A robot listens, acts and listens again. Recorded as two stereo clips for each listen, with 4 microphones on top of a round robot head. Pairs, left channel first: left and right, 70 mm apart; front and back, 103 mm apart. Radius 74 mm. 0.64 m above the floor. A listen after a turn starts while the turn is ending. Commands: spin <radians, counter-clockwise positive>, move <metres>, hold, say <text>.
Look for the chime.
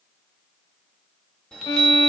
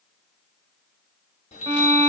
spin 0.17
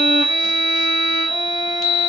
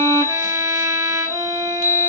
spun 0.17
say Found it: a chime, straight ahead, 1 to 2 m away.